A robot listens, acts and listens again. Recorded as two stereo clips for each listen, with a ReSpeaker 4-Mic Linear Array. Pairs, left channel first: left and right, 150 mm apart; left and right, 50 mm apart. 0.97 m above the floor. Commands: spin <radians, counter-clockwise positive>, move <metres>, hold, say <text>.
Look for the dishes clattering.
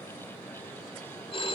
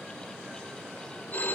hold
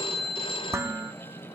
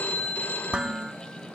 spin -0.26
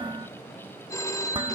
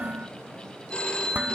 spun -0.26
spin -2.53
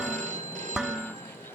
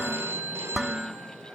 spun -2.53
say Found it: dishes clattering, straight ahead.